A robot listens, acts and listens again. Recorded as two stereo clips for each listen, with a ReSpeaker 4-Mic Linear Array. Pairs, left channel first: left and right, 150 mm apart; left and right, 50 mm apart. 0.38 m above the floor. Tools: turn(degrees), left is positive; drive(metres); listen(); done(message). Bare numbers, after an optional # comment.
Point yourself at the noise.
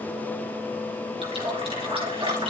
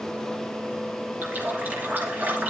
# The running tap: about 40° right or 140° right.
turn(-40)
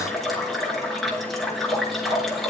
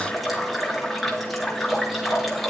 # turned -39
done("Found it: a running tap, straight ahead, over 4 m away.")